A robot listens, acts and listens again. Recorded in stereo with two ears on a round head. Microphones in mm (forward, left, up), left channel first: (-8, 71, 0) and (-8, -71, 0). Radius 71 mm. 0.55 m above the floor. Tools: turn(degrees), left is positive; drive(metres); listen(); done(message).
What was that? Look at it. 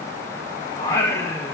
turn(degrees=15)
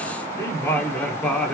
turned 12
turn(degrees=30)
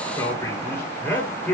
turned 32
turn(degrees=30)
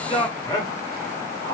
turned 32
turn(degrees=20)
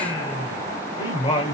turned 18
turn(degrees=145)
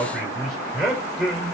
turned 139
done("Found it: singing, straight ahead.")